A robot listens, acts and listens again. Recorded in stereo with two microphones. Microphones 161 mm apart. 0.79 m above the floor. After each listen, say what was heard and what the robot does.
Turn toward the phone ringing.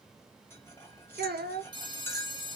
The phone ringing: about 30° right or 150° right. Turn 30° right.
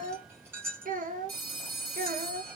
So it is at 115° right. Turn 115° right.
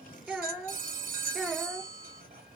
The phone ringing is now 60° right. Turn 60° right.
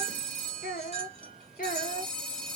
The phone ringing is now 10° left. Turn 10° left.
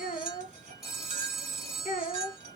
Found it: a phone ringing, straight ahead, 1 to 2 m away.